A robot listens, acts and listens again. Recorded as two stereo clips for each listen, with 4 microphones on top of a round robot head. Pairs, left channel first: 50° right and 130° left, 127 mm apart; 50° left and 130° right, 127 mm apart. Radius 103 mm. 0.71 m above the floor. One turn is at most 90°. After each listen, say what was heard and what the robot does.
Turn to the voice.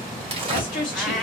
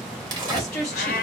The woman speaking: 20° right. Turn 20° right.
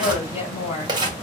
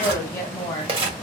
Facing the woman speaking.